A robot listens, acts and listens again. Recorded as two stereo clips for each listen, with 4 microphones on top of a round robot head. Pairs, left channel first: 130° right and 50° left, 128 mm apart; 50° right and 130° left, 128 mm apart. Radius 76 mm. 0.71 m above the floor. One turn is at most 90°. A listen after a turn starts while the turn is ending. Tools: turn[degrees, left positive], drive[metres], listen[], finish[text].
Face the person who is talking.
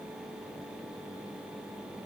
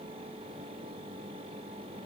Action: listen[]
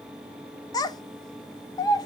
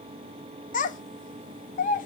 Thought: The child speaking: 70° right.
Action: turn[-70]
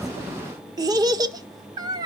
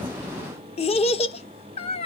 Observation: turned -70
Thought: The child speaking is now 10° right.
Action: turn[-10]
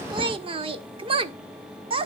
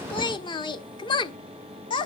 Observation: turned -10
Action: finish[Found it: a child speaking, straight ahead.]